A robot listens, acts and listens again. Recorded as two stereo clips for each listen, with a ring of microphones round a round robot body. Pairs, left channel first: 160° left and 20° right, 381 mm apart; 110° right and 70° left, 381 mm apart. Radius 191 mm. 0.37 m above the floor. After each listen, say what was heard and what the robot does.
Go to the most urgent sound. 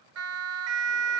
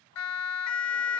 The siren: 70° right. Turn 70° right.
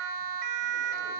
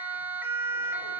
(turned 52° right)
The siren is now 15° right. Turn 15° right.
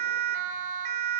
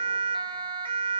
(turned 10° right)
The siren is now 10° right. Turn 10° right.
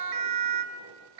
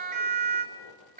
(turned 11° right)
Drive 1.0 m forward.
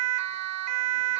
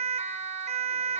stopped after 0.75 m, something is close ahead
Arrived at the siren, straight ahead.